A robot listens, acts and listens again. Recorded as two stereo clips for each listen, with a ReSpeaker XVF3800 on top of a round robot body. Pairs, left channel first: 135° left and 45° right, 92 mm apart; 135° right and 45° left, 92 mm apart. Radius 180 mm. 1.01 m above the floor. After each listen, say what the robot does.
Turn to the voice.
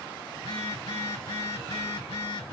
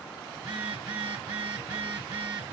Keep listening.
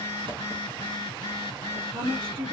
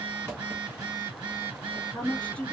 Turn 60° right.
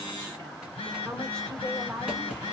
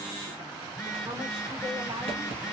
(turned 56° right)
Facing the woman speaking.